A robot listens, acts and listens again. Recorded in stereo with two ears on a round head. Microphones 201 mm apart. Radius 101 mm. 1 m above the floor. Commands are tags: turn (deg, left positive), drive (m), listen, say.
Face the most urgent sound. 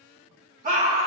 <turn deg="-35"/>
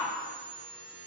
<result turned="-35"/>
<say>Facing the scream, 1 to 2 m away.</say>